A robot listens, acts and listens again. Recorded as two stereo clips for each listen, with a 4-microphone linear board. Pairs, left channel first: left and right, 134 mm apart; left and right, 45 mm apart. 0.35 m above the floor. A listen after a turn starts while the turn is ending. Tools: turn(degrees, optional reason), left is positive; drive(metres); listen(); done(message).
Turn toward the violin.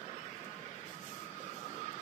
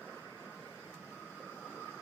listen()
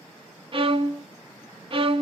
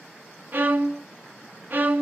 turn(degrees=-40, reason="The violin: about 40° right or 140° right.")
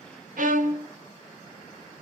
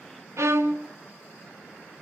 turn(degrees=-100, reason="So it is at 100° right.")
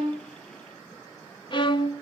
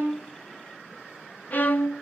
turn(degrees=35, reason="The violin is now 35° left.")
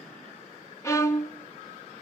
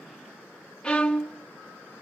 turn(degrees=20, reason="The violin is now 20° left.")
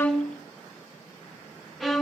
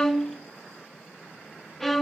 done("Facing the violin, under 1 m away.")